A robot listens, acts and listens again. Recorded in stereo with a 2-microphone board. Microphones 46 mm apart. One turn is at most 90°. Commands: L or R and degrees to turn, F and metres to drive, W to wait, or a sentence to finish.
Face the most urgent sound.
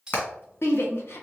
L60
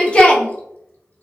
L25
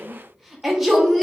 Found it: a shout, straight ahead, 1 to 2 m away.